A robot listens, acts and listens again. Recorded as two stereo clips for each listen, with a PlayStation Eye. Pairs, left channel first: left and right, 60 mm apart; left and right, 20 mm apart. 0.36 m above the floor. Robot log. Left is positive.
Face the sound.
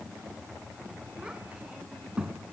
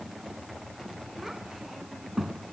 note: The child speaking: about 15° right or 165° right.
cmd yaw -15
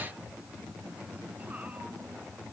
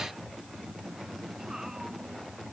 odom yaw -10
cmd idle
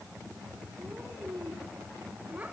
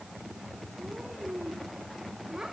note: The child speaking: about 25° right or 155° right.
cmd yaw -25
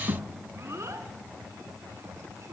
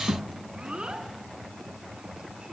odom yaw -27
note: So it is at 130° right.
cmd yaw -130
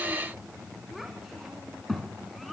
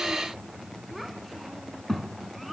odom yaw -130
end: Facing the child speaking, 2 to 4 m away.